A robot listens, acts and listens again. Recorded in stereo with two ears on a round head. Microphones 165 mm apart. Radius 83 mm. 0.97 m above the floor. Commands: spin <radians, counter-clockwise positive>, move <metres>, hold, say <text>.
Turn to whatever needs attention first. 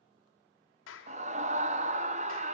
spin -0.70
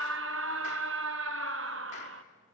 spin -1.75
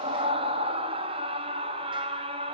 spin -0.52
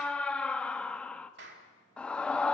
say Facing the scream, 1 to 2 m away.